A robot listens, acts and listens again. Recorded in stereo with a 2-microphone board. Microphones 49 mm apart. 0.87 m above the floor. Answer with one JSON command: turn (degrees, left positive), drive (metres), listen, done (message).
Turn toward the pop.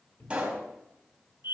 {"turn": -25}
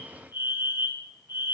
{"listen": true}
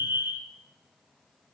{"done": "I heard a pop, but can't make it out now. It was about straight ahead or 130° right."}